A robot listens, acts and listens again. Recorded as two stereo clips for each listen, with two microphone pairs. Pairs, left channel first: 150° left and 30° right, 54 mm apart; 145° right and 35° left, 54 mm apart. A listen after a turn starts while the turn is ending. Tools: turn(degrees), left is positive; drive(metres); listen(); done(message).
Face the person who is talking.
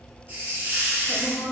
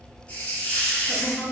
turn(degrees=-135)
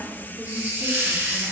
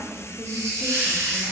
listen()
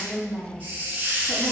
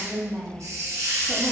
turn(degrees=-30)
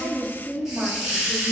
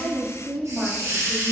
done("Facing the woman speaking, 1 to 2 m away.")